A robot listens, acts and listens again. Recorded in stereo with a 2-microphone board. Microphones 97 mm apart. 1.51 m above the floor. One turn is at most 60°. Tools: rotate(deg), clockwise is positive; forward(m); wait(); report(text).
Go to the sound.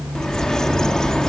rotate(-30)
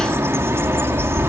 rotate(25)
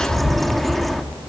forward(1.0)
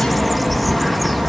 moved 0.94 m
forward(1.0)
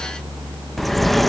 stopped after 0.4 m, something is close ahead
report("Arrived at the bird, straight ahead.")